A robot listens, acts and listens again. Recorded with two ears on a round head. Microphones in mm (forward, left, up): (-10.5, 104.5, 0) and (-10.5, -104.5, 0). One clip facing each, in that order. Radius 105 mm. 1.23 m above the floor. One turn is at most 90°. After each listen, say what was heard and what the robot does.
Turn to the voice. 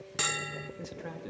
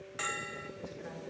The man speaking: about 55° left or 125° left. Turn 55° left.
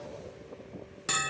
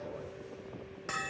So it is at 10° right. Turn 10° right.
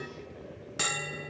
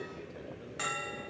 Keep listening.
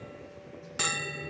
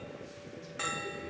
Keep listening.
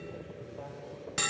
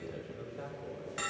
The man speaking is now 25° right. Turn 25° right.
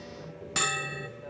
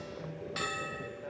Facing the man speaking.